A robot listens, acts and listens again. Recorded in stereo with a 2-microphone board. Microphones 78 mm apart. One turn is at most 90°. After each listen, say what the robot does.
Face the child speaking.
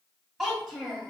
Turn 30° left.
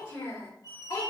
Turn 90° left.
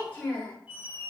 Turn 25° left.
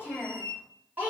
Turn 20° right.
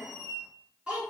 Turn 15° right.
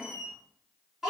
Facing the child speaking.